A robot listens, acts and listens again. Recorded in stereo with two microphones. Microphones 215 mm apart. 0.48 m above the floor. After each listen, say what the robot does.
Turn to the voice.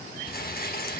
Keep listening.
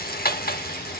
Keep listening.
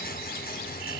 I can't make out anyone speaking to turn to.